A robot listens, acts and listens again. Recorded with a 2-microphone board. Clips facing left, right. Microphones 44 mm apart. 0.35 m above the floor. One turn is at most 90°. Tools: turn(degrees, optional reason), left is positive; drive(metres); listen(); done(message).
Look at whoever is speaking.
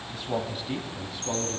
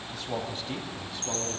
turn(degrees=30)
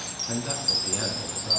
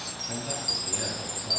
turn(degrees=90, reason="So it is at 150° left.")
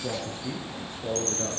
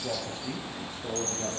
turn(degrees=70, reason="The man speaking is now 70° left.")
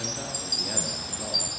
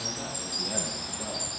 listen()
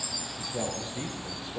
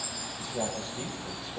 turn(degrees=35, reason="The man speaking is now 35° left.")
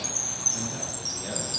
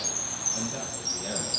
done("Facing the man speaking, over 4 m away.")